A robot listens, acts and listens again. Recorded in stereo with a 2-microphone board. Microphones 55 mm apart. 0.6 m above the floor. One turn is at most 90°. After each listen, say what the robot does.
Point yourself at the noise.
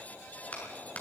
Turn 30° left.
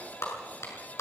Turn 90° left.
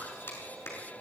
Turn 50° left.
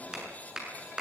Turn 15° right.
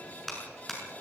Facing the clap, over 4 m away.